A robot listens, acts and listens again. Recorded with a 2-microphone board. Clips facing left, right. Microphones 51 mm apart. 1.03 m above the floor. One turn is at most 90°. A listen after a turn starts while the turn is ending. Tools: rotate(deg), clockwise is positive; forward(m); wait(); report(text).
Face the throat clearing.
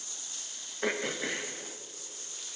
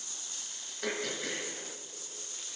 rotate(-25)
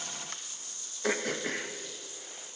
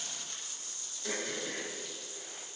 rotate(-90)
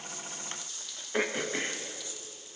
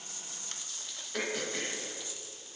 rotate(-30)
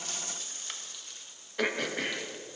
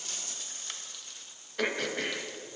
report("Facing the throat clearing, under 1 m away.")